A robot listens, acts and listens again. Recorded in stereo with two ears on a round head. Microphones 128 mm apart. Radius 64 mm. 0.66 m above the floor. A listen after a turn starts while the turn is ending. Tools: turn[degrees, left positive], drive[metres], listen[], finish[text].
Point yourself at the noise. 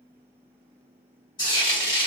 Thought: The frying: about 35° left or 145° left.
Action: turn[35]
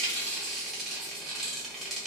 Action: finish[Facing the frying, 1 to 2 m away.]